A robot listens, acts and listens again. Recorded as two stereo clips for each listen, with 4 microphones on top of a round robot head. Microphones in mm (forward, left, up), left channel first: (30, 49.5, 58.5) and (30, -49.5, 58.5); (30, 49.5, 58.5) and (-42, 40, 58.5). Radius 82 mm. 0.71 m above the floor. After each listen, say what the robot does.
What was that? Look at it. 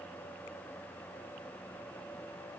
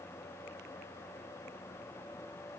Keep listening.
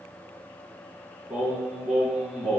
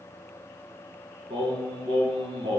Turn 180° left.
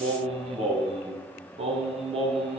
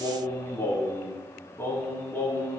Turn 60° right.
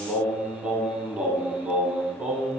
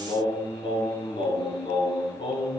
Turn 10° right.
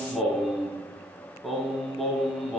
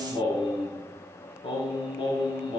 Facing the singing.